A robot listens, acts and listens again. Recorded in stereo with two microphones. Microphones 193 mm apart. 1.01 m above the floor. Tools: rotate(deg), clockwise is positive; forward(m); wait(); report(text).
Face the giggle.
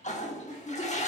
rotate(-35)
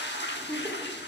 report("Found it: a giggle, straight ahead, 1 to 2 m away.")